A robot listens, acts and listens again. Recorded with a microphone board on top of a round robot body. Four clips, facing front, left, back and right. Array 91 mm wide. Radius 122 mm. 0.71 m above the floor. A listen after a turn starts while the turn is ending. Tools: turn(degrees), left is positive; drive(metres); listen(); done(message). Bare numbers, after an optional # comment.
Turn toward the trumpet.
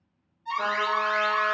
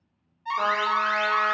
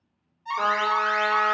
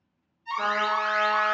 # The trumpet: 145° left.
turn(145)
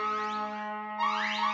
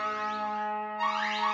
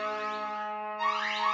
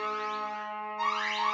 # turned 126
# The trumpet is now 20° left.
turn(20)
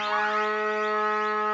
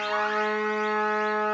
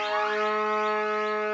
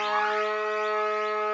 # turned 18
done("Found it: a trumpet, straight ahead.")